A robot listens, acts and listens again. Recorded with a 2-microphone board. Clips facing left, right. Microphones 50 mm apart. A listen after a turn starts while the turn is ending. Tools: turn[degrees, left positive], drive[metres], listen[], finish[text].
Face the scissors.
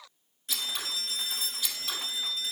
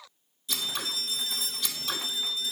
Action: turn[30]
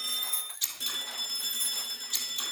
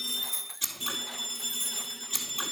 Thought: So it is at 20° right.
Action: turn[-20]
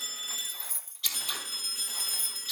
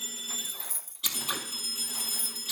Action: finish[Facing the scissors, 1 to 2 m away.]